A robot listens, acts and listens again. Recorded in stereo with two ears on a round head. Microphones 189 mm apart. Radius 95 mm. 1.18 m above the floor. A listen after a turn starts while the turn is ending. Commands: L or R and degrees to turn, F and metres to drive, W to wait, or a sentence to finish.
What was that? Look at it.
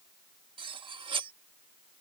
R25
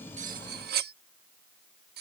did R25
R130
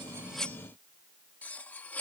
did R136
Found it: cutlery clinking, straight ahead.